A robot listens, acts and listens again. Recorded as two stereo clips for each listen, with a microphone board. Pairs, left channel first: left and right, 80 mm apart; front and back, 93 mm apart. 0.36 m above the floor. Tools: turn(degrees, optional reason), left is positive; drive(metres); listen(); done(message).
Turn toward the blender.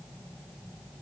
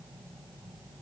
listen()
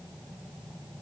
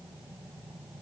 listen()
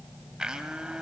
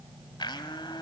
turn(degrees=-10, reason="The blender: 10° right.")
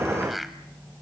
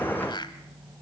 done("Facing the blender, 1 to 2 m away.")